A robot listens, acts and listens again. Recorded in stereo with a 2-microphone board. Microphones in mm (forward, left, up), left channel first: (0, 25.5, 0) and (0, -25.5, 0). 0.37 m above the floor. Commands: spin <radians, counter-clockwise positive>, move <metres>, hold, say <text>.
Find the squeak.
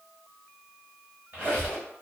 spin -0.79
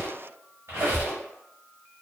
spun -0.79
spin -1.48
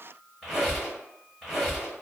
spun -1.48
say Found it: a squeak, straight ahead.